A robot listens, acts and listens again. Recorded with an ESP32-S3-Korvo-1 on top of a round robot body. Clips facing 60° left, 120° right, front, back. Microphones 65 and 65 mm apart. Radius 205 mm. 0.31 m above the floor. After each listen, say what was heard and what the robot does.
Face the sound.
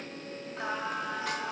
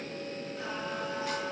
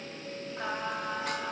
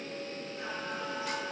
The singing: 40° left. Turn 40° left.
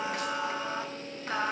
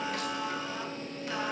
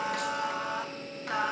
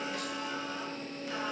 The singing is now 15° left. Turn 15° left.
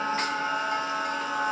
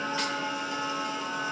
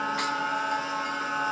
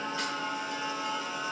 The singing is now 35° left. Turn 35° left.
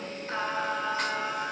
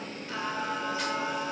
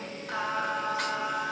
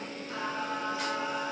The singing is now 25° left. Turn 25° left.
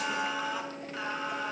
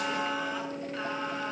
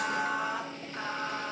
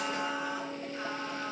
The singing is now 25° right. Turn 25° right.
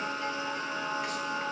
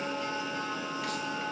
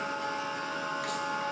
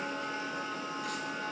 Found it: singing, straight ahead.